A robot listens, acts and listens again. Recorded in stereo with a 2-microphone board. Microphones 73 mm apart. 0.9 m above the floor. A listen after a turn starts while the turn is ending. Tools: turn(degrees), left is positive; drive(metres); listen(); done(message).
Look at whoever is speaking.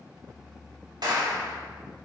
listen()
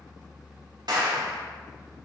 listen()
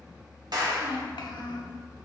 turn(degrees=90)
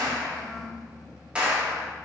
done("Facing the child speaking, 1 to 2 m away.")